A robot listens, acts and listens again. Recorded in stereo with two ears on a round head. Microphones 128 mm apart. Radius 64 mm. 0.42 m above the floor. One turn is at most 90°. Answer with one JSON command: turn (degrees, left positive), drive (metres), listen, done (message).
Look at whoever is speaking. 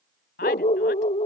{"turn": 70}
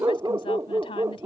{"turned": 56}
{"turn": 40}
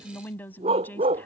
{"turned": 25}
{"turn": 15}
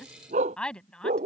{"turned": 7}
{"done": "Facing the woman speaking."}